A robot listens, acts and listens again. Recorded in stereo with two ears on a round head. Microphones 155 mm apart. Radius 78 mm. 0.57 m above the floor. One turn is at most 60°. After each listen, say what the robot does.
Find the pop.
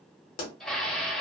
Turn 55° left.
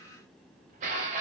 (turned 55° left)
Keep listening.
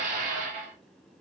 I heard a pop, but can't make it out now. It was about straight ahead or 70° left.